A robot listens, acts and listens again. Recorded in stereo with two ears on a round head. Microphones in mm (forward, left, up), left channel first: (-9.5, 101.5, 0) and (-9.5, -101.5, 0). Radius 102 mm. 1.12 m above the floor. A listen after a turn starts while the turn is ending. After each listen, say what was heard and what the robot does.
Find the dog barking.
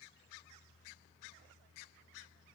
Keep listening.
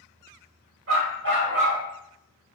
The dog barking: about 50° right or 130° right. Turn 50° right.
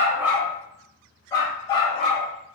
So it is at 25° left. Turn 25° left.
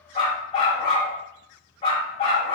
The dog barking is now 25° left. Turn 25° left.
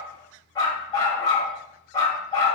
The dog barking is now 15° left. Turn 15° left.
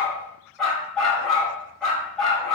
Facing the dog barking, 1 to 2 m away.